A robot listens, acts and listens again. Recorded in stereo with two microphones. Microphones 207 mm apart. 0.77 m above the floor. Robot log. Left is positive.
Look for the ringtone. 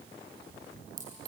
cmd idle
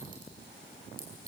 cmd idle
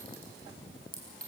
end: I can't make out a ringtone, only a clink.